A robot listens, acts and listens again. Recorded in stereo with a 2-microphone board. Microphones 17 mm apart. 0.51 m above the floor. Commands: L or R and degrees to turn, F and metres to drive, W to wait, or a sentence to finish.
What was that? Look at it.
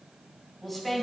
R30
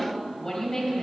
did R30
L25
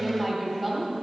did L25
R20
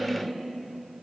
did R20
Found it: a woman speaking, straight ahead, 2 to 4 m away.